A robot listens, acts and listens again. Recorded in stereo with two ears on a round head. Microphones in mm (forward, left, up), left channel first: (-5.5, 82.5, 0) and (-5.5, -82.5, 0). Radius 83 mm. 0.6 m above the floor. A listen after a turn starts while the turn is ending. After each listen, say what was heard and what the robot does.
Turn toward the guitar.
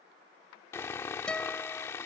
Turn 30° left.
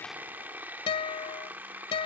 So it is at 145° left. Turn 145° left.
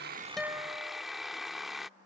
The guitar is now 20° right. Turn 20° right.
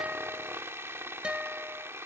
Found it: a guitar, straight ahead.